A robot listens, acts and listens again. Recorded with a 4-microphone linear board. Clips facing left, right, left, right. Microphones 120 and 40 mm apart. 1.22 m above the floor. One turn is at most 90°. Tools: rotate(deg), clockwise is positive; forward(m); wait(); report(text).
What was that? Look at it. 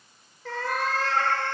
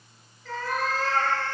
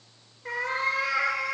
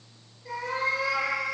rotate(-65)
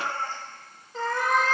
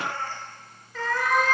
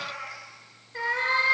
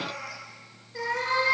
rotate(-30)
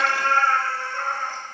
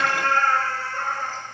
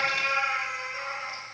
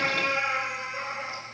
report("Facing the cat meowing.")